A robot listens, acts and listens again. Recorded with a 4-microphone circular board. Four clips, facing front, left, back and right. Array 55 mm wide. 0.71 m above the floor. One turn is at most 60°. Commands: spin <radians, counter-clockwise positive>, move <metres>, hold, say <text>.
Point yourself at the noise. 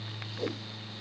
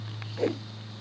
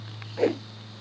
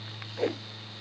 spin -1.05
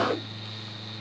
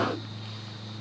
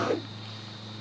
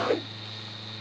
spin -1.05
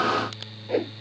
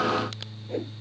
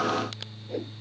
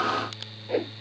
spin -0.70
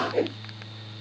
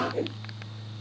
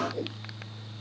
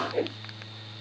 spin -0.44
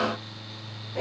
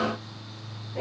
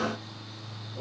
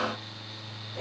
spin 0.26
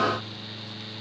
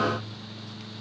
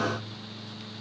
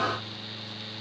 hold
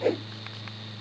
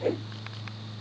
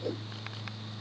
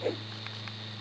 say Found it: a whoosh, straight ahead.